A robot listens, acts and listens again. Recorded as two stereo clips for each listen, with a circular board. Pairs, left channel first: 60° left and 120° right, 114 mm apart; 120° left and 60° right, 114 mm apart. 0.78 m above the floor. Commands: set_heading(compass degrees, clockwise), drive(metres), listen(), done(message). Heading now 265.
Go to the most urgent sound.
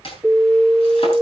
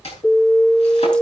set_heading(105)
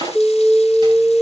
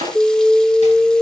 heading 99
drive(1.0)
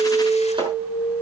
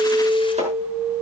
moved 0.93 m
drive(1.0)
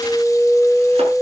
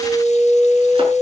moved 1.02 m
set_heading(114)
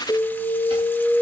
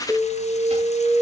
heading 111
drive(1.0)
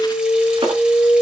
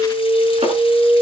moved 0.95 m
drive(1.0)
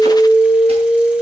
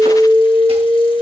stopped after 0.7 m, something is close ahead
done("Arrived at the alarm, straight ahead.")